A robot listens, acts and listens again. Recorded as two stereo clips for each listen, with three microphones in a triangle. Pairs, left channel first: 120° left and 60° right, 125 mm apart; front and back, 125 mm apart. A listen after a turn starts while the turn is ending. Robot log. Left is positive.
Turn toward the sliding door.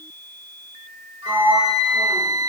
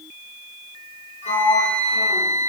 note: The sliding door: 35° left.
cmd yaw +35
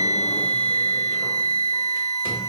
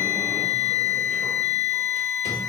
cmd idle
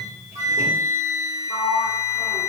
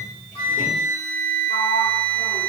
cmd idle
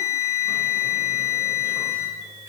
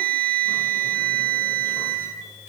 end: I heard a sliding door from this way, but can't make it out now.